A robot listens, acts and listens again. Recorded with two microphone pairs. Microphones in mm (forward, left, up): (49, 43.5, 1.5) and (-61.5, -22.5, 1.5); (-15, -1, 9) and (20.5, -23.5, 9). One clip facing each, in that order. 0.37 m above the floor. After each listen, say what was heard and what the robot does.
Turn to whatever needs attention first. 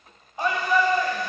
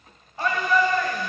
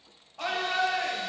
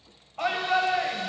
The shout: 40° right. Turn 40° right.
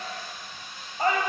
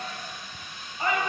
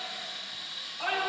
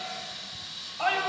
Found it: a shout, straight ahead, 1 to 2 m away.